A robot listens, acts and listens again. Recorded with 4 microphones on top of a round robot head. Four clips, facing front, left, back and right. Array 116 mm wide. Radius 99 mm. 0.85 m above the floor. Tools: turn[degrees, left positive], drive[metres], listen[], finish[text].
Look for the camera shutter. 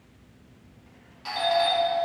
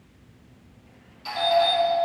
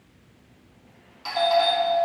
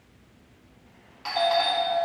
Action: listen[]
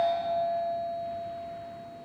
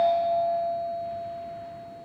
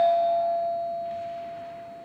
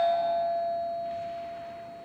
Action: listen[]
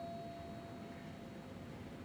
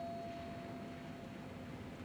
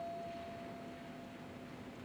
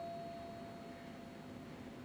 Action: finish[I can't make out a camera shutter to turn to.]